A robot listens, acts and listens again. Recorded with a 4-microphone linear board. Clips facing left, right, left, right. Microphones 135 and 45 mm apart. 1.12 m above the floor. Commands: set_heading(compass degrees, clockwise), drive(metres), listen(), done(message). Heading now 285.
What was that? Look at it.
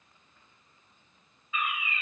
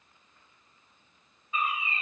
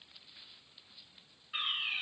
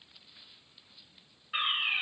set_heading(320)
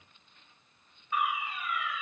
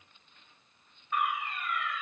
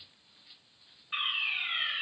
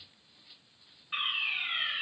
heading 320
done("Facing the fire alarm.")